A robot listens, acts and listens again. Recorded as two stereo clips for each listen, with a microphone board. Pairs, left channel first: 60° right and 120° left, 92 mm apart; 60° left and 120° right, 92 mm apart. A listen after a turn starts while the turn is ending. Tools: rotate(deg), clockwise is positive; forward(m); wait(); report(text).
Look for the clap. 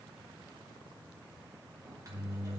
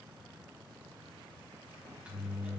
wait()
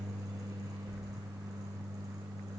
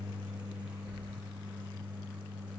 wait()
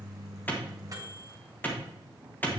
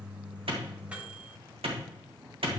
rotate(130)
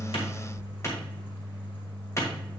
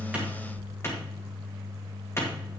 report("Facing the clap, 2 to 4 m away.")